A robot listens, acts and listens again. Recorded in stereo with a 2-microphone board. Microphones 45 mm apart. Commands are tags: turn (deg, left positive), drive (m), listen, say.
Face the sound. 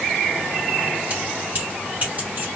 <turn deg="-40"/>
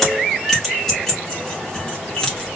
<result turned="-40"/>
<turn deg="20"/>
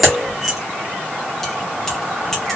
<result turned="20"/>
<turn deg="10"/>
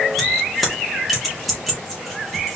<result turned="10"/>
<say>Facing the keys jangling, 2 to 4 m away.</say>